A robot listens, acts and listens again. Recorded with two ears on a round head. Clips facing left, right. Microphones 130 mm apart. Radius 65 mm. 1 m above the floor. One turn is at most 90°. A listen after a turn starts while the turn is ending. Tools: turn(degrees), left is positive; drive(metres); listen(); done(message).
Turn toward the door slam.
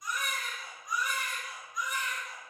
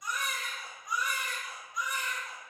listen()
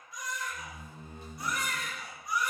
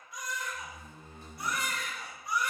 turn(degrees=25)
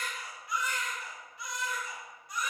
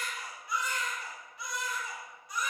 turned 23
listen()
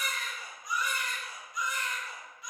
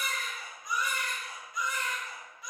done("I heard a door slam, but can't make it out now. It was about straight ahead or 135° left.")